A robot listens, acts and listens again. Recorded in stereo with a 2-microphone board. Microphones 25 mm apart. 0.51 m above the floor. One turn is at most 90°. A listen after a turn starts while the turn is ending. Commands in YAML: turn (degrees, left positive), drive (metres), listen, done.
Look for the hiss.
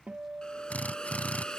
turn: 35
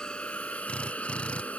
turn: 90
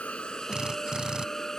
turn: 20
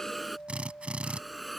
done: "Found it: a hiss, straight ahead."